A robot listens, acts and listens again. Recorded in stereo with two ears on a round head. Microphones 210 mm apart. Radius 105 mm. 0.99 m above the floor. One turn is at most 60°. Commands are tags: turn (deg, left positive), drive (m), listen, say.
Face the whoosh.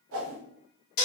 <turn deg="-60"/>
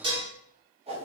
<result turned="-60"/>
<turn deg="-30"/>
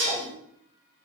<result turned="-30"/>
<listen/>
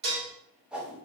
<say>Facing the whoosh, 1 to 2 m away.</say>